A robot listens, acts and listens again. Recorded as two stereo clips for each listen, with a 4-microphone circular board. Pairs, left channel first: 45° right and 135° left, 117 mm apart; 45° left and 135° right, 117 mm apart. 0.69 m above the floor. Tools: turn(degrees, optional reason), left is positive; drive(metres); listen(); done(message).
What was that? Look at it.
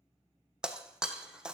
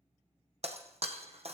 turn(degrees=-140, reason="The breaking glass: 140° right.")
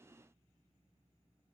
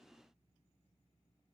done("I heard breaking glass from this way, but can't make it out now.")